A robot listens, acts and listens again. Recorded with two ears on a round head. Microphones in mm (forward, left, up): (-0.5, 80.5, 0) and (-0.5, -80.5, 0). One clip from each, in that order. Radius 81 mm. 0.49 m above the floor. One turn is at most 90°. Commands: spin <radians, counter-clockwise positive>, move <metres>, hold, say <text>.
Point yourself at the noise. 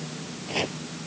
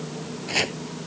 spin -0.79
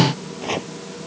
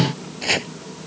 spin -1.48
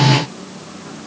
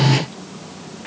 hold
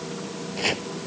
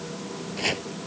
say Facing the chopping.